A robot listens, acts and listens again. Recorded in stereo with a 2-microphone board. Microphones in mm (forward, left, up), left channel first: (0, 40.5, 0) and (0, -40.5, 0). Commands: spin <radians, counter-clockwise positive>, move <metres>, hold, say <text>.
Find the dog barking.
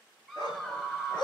spin 1.22
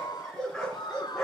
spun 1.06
spin 0.17
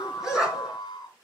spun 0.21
say Found it: a dog barking, straight ahead.